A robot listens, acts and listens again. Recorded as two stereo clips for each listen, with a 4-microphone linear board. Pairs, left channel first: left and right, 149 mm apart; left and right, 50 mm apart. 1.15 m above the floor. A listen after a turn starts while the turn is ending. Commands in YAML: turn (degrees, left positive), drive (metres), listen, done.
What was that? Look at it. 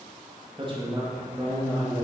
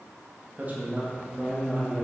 turn: -25
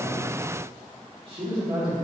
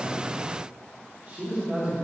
turn: -35
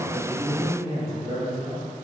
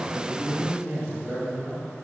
turn: -115
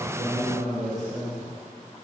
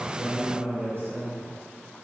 turn: -55
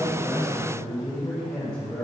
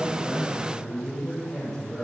turn: 15
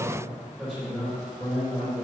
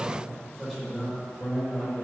done: "Facing the man speaking."